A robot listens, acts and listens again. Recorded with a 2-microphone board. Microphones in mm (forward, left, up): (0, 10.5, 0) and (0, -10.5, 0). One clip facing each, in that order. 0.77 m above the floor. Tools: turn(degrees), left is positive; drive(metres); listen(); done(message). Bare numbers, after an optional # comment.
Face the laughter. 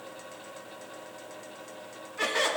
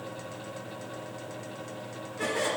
# The laughter: about 60° left or 120° left.
turn(60)
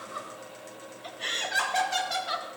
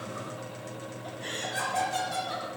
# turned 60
# So it is at 65° left.
turn(65)
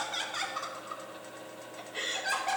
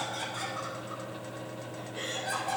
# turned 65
# The laughter is now 40° left.
turn(40)
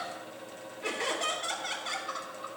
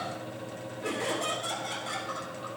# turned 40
# The laughter is now 25° left.
turn(25)
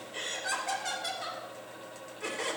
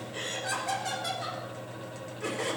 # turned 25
done("Found it: laughter, straight ahead.")